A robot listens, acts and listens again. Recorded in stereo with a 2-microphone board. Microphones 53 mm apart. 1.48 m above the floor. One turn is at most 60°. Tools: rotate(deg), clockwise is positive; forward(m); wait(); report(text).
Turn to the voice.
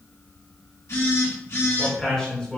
rotate(-15)
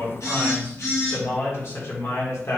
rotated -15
rotate(-60)
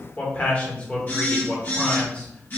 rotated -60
rotate(-25)
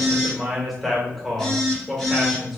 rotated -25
report("Found it: a man speaking, straight ahead, 1 to 2 m away.")